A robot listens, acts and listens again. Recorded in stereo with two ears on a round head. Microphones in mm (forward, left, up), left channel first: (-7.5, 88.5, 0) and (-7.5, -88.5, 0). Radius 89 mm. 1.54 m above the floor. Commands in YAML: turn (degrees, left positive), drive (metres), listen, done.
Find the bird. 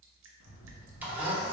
turn: 70
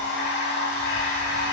listen: true
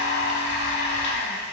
listen: true
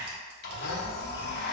done: "I heard a bird, but can't make it out now. It was about straight ahead or 40° left."